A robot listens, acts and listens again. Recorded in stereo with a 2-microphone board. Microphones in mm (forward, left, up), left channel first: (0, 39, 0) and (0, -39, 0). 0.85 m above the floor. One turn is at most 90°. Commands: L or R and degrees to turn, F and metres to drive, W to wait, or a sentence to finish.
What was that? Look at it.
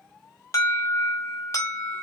L35
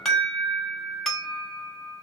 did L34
Found it: an alarm, straight ahead, 1 to 2 m away.